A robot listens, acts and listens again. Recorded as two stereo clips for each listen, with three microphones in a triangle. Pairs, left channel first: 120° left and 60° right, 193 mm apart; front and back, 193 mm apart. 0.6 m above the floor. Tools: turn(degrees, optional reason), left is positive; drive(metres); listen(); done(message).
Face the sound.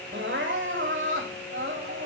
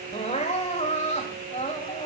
turn(degrees=-55, reason="The crying: 55° right.")
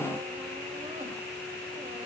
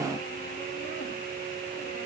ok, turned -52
listen()
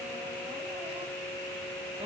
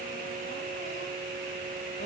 listen()
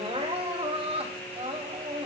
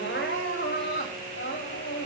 done("Facing the crying, over 4 m away.")